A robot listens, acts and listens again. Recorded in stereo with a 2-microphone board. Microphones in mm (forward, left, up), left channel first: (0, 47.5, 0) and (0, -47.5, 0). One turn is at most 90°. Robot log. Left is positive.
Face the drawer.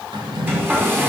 note: The drawer: about 55° right or 125° right.
cmd yaw -55
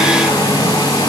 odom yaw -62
cmd idle
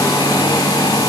cmd idle
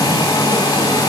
end: I heard a drawer, but can't make it out now. It was about 10° left or 65° right.